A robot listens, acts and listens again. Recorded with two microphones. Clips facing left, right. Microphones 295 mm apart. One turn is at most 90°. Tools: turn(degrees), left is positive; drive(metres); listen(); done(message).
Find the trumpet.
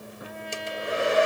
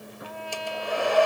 turn(degrees=20)
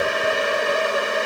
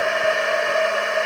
listen()
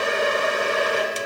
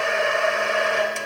listen()
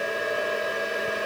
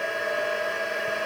done("I heard a trumpet, but can't make it out now. It was about straight ahead or 140° left.")